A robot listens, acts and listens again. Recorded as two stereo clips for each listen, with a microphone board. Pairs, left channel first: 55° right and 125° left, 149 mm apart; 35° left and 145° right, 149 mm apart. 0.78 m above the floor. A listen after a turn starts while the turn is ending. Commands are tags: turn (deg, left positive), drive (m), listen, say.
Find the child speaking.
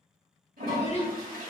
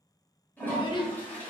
<turn deg="-20"/>
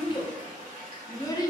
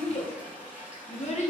<say>Facing the child speaking, under 1 m away.</say>